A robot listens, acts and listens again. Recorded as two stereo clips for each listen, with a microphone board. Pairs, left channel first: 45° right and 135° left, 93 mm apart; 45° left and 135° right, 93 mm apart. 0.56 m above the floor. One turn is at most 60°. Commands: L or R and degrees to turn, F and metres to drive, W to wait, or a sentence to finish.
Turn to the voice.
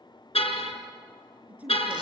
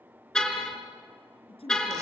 L60
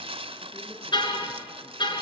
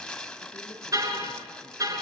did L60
W
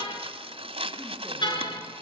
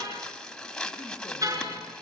W
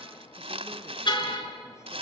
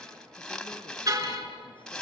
I heard a woman speaking from this way, but can't make it out now.